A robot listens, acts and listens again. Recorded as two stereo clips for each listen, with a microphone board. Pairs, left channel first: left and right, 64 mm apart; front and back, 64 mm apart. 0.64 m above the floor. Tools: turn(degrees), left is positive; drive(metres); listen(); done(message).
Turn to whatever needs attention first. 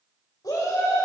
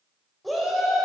turn(degrees=90)
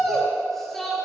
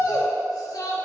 done("Found it: a shout, straight ahead.")